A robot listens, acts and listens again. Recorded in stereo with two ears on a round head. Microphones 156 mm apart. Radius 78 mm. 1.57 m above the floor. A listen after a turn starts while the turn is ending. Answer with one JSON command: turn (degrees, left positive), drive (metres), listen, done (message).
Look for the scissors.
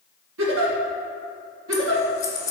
{"turn": 20}
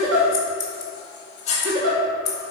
{"turn": 140}
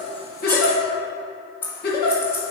{"turn": 15}
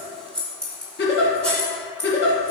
{"done": "Facing the scissors, 2 to 4 m away."}